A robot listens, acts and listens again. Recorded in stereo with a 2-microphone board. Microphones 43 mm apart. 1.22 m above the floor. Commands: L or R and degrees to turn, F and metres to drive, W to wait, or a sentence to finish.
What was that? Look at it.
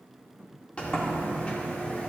L25
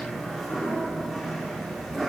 Facing the sliding door, 2 to 4 m away.